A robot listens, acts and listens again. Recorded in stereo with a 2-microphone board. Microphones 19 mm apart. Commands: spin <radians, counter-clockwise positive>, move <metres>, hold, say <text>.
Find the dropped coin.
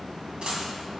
spin -1.13
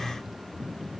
hold
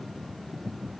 say I heard a dropped coin, but can't make it out now. It was about straight ahead or 50° right.